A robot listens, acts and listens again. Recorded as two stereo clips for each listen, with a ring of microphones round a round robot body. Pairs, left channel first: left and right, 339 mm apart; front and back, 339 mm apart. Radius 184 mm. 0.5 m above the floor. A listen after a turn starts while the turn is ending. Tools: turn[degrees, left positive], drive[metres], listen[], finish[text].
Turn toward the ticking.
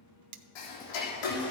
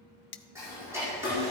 Thought: The ticking: 95° left.
Action: turn[95]
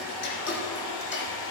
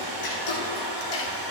Thought: The ticking is now 35° left.
Action: turn[35]
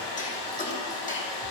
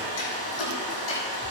Thought: The ticking is now 20° left.
Action: turn[20]
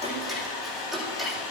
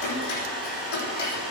Action: finish[Found it: ticking, straight ahead.]